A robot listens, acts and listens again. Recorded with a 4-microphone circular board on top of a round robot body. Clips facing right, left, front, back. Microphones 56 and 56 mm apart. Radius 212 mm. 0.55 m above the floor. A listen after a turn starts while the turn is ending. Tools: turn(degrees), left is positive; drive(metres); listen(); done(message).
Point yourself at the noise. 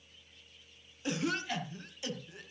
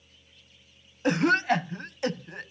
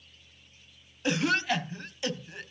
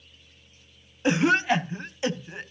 turn(degrees=120)
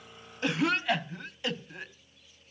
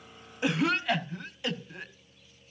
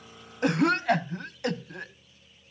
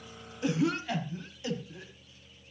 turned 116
done("Facing the cough.")